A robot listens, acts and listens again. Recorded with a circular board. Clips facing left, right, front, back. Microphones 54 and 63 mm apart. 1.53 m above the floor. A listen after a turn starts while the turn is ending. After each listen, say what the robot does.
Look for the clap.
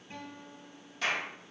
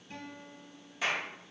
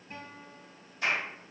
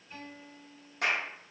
Turn 170° right.
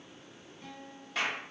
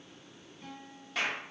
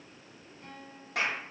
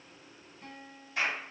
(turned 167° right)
Facing the clap, 1 to 2 m away.